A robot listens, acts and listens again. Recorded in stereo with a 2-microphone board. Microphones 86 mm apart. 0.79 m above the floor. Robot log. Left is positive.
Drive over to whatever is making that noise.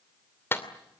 note: The clap: about 25° left or 155° left.
cmd yaw +25
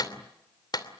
note: So it is at 130° left.
cmd yaw +130
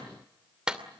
note: The clap is now 10° right.
cmd yaw -10
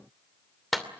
cmd fwd 1.0
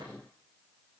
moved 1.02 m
cmd idle
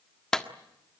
note: The clap is now 10° left.
cmd yaw +10
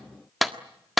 cmd fwd 1.0
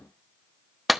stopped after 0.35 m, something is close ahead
end: I am next to the clap.